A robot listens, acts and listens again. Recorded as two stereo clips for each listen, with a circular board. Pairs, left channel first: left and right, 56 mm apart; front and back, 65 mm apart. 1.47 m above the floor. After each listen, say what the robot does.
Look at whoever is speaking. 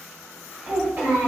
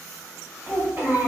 Turn 145° right.
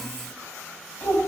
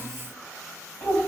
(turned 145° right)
Turn 20° left.
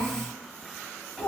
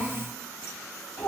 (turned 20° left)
Facing the child speaking, 1 to 2 m away.